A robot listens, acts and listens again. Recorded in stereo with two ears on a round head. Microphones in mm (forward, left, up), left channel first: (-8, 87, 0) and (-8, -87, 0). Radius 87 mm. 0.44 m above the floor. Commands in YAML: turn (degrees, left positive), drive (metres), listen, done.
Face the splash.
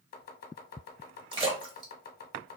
turn: -25
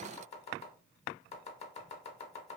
listen: true
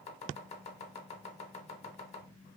done: "I heard a splash, but can't make it out now. It was about straight ahead or 130° right."